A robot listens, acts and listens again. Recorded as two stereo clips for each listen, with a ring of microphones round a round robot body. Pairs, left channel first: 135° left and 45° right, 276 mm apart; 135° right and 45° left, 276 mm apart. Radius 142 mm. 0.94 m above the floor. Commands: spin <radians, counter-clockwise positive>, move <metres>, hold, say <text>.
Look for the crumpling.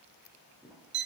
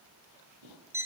spin 0.70
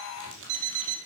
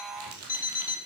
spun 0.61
say Facing the crumpling.